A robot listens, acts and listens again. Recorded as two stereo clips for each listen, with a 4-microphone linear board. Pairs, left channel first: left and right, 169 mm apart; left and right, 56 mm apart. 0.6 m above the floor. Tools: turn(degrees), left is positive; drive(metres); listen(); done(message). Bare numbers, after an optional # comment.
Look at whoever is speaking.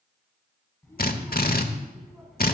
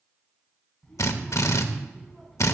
turn(30)
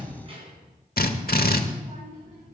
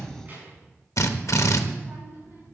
# So it is at 45° right.
turn(-45)
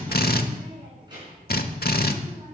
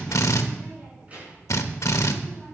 # The child speaking is now 30° right.
turn(-30)
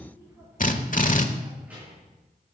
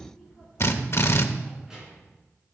# The child speaking is now 10° right.
turn(-10)
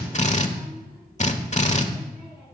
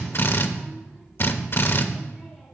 done("Found it: a child speaking, straight ahead.")